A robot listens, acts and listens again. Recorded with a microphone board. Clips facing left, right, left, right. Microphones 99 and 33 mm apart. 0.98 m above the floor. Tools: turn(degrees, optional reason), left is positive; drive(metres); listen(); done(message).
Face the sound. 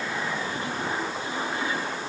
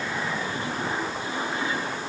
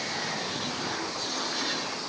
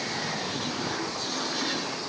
listen()
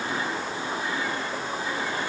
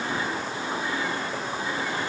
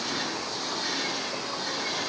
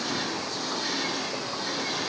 listen()
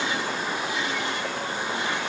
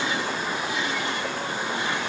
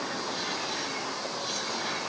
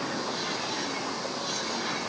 done("I can't make out anything to turn to.")